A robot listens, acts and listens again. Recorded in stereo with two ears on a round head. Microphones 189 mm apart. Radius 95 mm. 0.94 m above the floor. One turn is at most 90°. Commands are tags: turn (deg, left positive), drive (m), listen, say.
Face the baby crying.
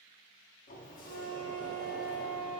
<listen/>
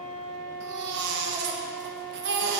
<turn deg="-55"/>
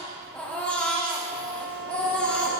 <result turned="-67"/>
<say>Facing the baby crying.</say>